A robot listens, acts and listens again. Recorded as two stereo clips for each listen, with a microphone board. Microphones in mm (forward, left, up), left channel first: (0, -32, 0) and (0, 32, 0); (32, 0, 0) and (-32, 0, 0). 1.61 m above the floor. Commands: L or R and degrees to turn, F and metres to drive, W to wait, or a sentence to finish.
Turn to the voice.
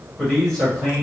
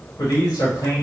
R10
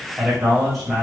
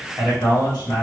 Facing the man speaking.